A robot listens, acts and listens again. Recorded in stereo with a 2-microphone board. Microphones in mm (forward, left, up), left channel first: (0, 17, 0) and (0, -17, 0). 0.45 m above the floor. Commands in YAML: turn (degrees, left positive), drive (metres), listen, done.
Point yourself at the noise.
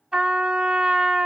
turn: -25
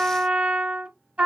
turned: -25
turn: -125
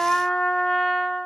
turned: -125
done: "Facing the trumpet."